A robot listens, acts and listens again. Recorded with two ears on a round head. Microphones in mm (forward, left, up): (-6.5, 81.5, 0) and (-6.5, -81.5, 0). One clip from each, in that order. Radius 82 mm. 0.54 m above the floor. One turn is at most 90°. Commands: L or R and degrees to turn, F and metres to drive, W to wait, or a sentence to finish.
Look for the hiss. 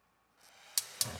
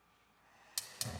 L35
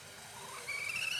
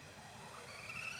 L90
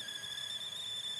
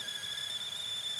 Found it: a hiss, straight ahead, under 1 m away.